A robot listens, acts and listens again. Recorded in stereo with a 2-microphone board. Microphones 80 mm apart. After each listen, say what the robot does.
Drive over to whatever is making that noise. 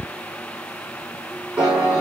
Turn 25° right.
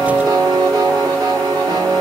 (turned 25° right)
Turn 130° right.
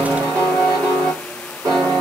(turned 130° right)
Turn 50° right.
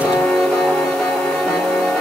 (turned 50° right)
Drive 1.0 m forward.
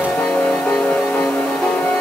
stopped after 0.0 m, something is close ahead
Turn 15° left.
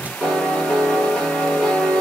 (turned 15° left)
Blocked. The piano is further on, straight ahead.